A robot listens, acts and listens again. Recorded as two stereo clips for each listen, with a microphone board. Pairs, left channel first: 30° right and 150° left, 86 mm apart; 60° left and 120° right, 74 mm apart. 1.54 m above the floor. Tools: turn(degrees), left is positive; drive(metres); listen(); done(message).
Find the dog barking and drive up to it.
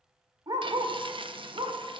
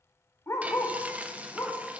turn(degrees=110)
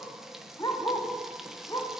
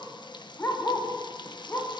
drive(metres=1.0)
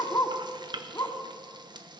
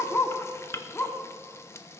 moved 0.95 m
drive(metres=1.0)
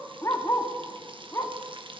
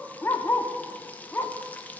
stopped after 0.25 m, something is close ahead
turn(degrees=10)
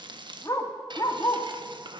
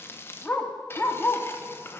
done("I am next to the dog barking.")